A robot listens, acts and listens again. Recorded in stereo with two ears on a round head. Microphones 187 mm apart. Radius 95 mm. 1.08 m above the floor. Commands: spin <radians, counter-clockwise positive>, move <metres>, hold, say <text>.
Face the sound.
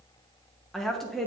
spin 0.52
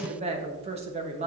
spin -0.52
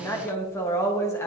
spin 0.26
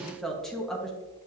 say Facing the woman speaking.